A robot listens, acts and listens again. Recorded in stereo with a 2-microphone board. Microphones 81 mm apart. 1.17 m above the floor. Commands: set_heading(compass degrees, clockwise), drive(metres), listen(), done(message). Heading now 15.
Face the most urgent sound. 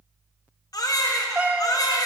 set_heading(330)
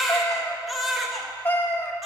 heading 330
done("Found it: a baby crying, straight ahead, under 1 m away.")